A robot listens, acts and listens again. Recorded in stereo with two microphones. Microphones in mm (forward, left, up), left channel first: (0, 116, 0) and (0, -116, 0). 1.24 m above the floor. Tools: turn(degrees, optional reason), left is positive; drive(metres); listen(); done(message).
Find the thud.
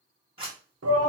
listen()
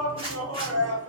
listen()
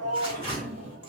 turn(degrees=30)
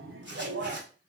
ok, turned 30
listen()
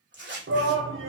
done("I heard a thud, but can't make it out now. It was about 25° right or 145° left.")